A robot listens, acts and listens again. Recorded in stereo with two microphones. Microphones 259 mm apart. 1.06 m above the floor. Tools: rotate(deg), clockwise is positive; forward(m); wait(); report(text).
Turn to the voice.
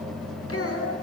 rotate(-60)
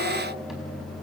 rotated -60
wait()
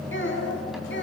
rotate(-45)
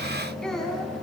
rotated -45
report("Facing the child speaking, over 4 m away.")